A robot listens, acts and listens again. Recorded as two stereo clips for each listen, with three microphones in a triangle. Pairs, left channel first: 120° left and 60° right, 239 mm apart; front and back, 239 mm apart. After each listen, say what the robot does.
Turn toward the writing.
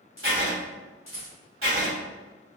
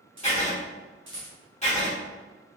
Turn 55° right.
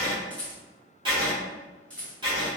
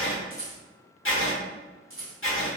Found it: writing, straight ahead.